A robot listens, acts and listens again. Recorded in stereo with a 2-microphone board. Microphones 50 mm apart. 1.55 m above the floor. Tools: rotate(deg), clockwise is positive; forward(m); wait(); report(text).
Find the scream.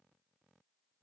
wait()
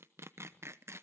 wait()
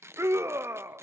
rotate(65)
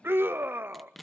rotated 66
rotate(45)
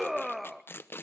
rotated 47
report("Facing the scream, under 1 m away.")